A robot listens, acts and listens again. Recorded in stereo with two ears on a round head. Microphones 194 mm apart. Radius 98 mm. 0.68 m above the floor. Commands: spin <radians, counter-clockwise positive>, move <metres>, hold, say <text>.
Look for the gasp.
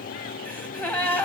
spin 0.52
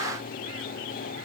hold
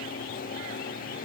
say I heard a gasp, but can't make it out now. It was about 20° right or 140° left.